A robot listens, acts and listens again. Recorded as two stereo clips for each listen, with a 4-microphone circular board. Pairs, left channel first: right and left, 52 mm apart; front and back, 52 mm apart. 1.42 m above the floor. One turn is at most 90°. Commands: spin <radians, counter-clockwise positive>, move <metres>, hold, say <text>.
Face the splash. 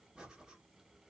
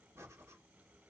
hold
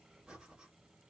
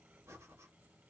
hold
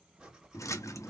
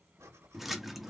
spin -1.57
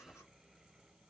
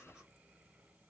say Facing where the splash came from. I can't hear it now.